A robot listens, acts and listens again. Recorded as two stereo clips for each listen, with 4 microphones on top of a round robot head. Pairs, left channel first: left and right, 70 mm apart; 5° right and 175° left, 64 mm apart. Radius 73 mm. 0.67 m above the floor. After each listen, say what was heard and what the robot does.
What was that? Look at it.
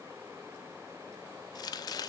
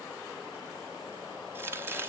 The chopping: 120° left. Turn 120° left.
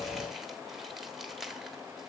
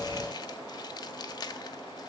Found it: chopping, straight ahead, 1 to 2 m away.